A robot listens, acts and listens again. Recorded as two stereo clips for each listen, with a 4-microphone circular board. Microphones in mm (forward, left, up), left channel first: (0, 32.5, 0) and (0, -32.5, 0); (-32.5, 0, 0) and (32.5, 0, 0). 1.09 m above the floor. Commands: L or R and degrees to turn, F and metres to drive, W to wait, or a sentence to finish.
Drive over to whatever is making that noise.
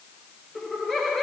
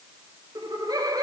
F1.0
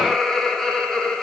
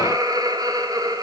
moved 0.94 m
L10
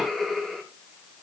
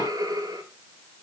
F1.0
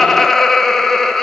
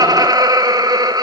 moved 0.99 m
F1.0
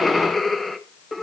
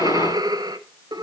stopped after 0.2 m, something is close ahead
I am next to the laughter.